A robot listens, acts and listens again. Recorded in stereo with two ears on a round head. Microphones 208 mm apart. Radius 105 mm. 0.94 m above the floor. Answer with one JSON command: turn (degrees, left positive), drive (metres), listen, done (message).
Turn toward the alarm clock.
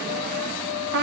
{"listen": true}
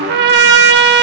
{"listen": true}
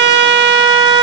{"done": "I can't make out an alarm clock, only a trumpet."}